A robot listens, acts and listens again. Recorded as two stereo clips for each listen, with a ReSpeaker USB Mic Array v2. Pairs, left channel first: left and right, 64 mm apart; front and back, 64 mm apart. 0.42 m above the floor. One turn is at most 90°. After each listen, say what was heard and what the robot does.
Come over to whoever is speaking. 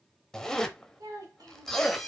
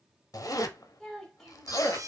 The child speaking: 80° right. Turn 80° right.
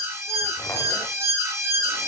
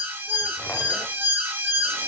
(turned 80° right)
Keep listening.
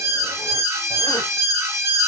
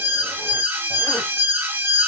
Keep listening.
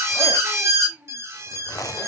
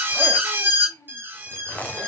The child speaking is now 25° right. Turn 25° right.
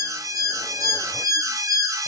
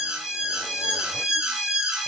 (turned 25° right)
Keep listening.
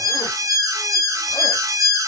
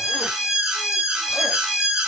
Keep listening.
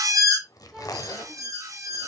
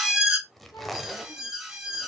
Facing where the child speaking came from. I can't hear it now. I did not reach it.